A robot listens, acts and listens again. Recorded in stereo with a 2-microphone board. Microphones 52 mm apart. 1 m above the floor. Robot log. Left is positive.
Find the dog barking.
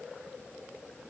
cmd idle
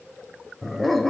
cmd yaw +30
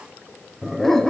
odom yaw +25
cmd yaw +30
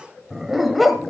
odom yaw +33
cmd yaw +30
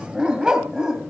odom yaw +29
note: So it is at 15° right.
cmd yaw -15
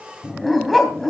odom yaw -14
end: Found it: a dog barking, straight ahead.